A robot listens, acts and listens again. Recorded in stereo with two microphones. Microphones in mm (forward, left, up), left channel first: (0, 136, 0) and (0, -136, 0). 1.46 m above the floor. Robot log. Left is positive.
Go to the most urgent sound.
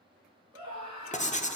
note: The scream: about 20° right or 160° right.
cmd yaw -20
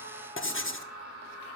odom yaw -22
note: So it is at 140° right.
cmd yaw -140
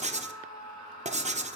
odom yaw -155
note: The scream is now 15° left.
cmd yaw +15
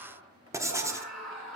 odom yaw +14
cmd fwd 1.0
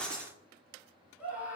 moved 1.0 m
cmd fwd 1.0
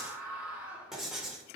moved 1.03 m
cmd fwd 1.0
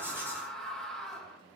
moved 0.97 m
cmd fwd 1.0
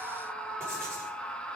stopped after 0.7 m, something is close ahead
end: Arrived at the scream, straight ahead.